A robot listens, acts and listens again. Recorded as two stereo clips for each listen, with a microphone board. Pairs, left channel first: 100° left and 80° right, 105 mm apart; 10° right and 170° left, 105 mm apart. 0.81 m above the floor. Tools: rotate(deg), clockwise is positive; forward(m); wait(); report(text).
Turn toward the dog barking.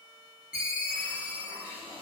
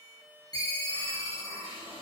wait()
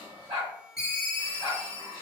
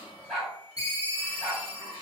rotate(100)
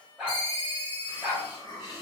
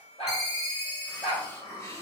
report("Facing the dog barking, 1 to 2 m away.")